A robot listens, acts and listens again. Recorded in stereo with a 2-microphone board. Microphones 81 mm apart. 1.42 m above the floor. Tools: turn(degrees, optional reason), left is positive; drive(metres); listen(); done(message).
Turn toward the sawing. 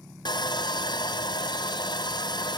turn(degrees=70, reason="The sawing: about 70° left or 110° left.")
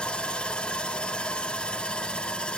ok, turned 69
turn(degrees=15, reason="So it is at 15° left.")
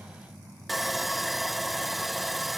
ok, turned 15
done("Facing the sawing, under 1 m away.")